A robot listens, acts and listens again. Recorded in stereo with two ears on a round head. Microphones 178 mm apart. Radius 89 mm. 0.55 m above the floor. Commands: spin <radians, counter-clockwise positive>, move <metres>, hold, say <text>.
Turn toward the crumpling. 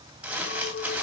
spin -0.52
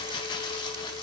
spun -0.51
spin 0.44
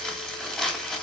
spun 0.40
say Found it: crumpling, straight ahead, 2 to 4 m away.